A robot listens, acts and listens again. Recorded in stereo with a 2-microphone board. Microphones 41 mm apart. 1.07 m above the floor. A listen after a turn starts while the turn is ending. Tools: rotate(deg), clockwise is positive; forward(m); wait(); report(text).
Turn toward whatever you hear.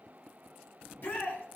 rotate(-60)
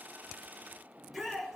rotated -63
report("Found it: a shout, straight ahead.")